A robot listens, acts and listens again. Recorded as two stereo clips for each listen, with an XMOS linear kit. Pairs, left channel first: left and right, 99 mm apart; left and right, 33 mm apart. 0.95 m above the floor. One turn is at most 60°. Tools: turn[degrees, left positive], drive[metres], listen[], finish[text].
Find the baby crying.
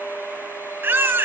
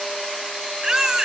Thought: The baby crying: about 20° right or 160° right.
Action: turn[-20]
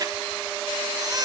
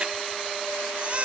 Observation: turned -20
Thought: So it is at 135° right.
Action: turn[-60]
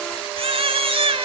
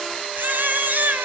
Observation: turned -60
Thought: The baby crying is now 75° right.
Action: turn[-60]
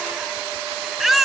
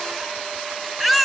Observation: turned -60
Action: finish[Facing the baby crying, 1 to 2 m away.]